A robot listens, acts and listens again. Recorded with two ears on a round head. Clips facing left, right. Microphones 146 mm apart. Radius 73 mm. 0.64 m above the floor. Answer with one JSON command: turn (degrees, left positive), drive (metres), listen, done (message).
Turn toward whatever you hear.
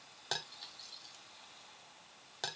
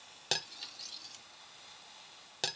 {"turn": -25}
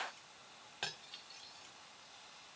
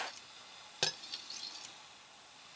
{"turn": -125}
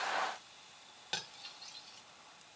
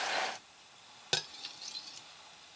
{"turn": -55}
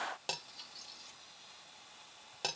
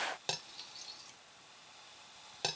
{"done": "Facing the cutlery clinking, under 1 m away."}